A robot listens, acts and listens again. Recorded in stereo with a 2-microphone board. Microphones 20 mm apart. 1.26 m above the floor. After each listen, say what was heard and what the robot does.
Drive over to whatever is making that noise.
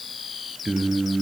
The singing: about 45° right or 135° right. Turn 45° right.
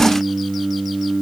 So it is at 85° right. Turn 85° right.
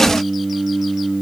The singing is now 30° right. Turn 30° right.
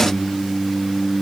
The singing is now 15° left. Turn 15° left.
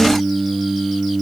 The singing is now 10° left. Turn 10° left.
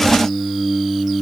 Drive 1.0 m forward.
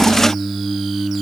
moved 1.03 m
Drive 1.0 m forward.
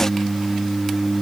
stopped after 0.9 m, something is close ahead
Arrived at the singing, straight ahead.